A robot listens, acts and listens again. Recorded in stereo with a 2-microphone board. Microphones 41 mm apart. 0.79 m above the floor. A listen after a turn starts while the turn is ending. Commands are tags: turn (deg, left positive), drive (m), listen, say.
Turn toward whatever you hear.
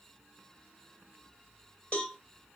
<turn deg="30"/>
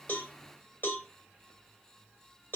<turn deg="125"/>
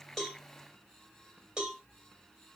<turn deg="-20"/>
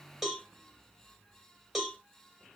<say>Facing the cowbell.</say>